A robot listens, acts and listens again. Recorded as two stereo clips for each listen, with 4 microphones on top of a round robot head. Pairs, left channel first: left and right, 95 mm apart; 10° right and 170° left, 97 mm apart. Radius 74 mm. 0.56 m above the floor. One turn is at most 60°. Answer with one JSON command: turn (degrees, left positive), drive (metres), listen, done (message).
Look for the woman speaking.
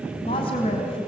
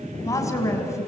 {"turn": 50}
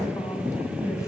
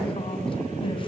{"listen": true}
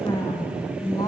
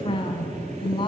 {"turn": 30}
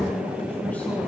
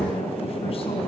{"listen": true}
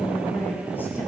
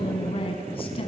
{"turn": 15}
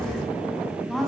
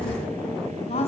{"done": "Facing the woman speaking, over 4 m away."}